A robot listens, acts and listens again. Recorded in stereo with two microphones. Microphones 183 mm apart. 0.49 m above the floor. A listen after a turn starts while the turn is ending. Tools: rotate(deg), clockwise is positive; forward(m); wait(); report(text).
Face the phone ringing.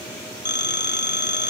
rotate(-65)
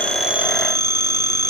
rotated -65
rotate(-25)
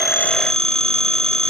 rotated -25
report("Facing the phone ringing.")